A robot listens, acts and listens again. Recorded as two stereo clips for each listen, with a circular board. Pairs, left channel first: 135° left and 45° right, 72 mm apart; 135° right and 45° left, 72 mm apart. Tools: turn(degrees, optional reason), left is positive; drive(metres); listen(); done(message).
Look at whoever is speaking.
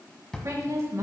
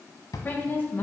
turn(degrees=-80, reason="The woman speaking: 80° right.")
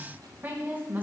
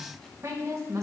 turn(degrees=15, reason="The woman speaking is now 15° left.")
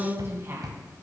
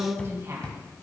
done("Found it: a woman speaking, straight ahead.")